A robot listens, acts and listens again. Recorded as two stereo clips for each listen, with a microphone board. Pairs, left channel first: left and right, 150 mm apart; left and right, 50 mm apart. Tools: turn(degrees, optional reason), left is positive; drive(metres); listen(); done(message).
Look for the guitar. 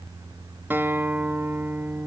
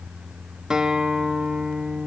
turn(degrees=-30)
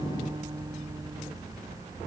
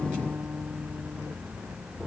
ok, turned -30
listen()
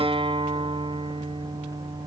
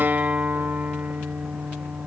turn(degrees=-130, reason="So it is at 130° right.")
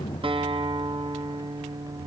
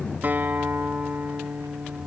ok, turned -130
turn(degrees=-45, reason="The guitar is now 45° right.")
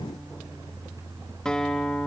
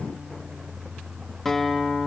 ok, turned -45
done("Found it: a guitar, straight ahead.")